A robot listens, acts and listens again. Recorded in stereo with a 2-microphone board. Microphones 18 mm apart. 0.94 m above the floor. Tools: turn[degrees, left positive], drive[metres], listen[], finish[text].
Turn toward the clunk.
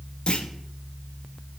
Thought: The clunk: about 60° left or 120° left.
Action: turn[60]
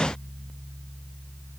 Action: listen[]
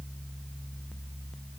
Action: finish[I heard a clunk, but can't make it out now. It was about straight ahead or 60° left.]